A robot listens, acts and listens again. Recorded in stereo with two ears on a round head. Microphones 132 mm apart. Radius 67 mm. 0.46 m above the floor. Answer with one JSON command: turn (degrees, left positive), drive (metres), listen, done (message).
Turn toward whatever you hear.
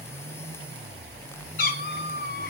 {"turn": 65}
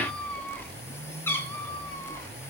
{"turn": 15}
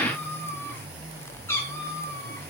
{"turn": 20}
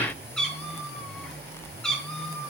{"done": "Facing the cat meowing, 2 to 4 m away."}